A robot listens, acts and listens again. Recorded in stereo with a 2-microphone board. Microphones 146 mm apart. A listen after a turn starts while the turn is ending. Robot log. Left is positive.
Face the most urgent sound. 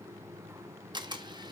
cmd idle
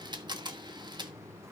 cmd idle
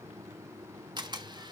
end: I can't make out anything urgent to turn to.